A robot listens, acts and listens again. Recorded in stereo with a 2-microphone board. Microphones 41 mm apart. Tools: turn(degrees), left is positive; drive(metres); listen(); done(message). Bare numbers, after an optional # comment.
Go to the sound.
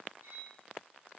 # The cutlery clinking: about 70° right or 110° right.
turn(-70)
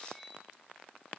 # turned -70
drive(1.0)
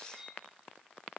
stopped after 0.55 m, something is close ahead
# The cutlery clinking is now 10° right.
turn(-10)
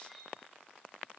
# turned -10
done("Blocked. The cutlery clinking is further on, straight ahead.")